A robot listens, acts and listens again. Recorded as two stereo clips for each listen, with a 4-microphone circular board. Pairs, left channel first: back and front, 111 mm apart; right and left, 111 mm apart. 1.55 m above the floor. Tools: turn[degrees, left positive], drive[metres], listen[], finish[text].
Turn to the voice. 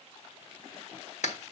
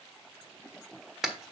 Action: listen[]
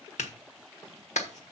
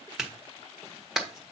Action: listen[]
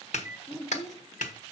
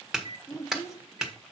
Thought: The child speaking: 145° right.
Action: turn[-145]
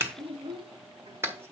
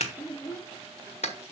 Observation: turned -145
Thought: The child speaking is now 30° right.
Action: turn[-30]
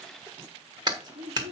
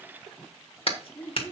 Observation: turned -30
Thought: The child speaking is now 15° right.
Action: turn[-15]
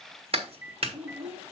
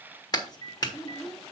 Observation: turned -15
Action: finish[Found it: a child speaking, straight ahead.]